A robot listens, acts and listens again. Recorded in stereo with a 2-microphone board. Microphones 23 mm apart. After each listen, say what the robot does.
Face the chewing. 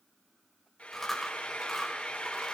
Turn 30° left.
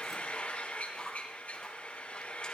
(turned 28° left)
Turn 150° left.
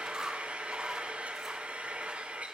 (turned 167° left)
Turn 20° right.
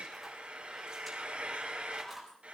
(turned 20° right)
Facing the chewing, over 4 m away.